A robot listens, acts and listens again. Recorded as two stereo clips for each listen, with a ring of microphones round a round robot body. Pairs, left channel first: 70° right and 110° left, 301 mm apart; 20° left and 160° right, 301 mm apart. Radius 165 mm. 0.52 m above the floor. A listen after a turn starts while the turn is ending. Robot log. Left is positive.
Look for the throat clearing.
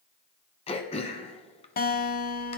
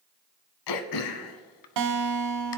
end: Facing the throat clearing.